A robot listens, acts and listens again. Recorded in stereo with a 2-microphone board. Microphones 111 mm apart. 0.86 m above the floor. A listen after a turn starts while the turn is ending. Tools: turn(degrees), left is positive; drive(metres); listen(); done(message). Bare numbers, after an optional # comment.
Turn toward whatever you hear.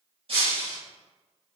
# The breaking glass: about 60° right or 120° right.
turn(-60)
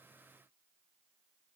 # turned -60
listen()
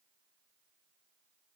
done("I heard breaking glass, but can't make it out now. It was about straight ahead or 60° right.")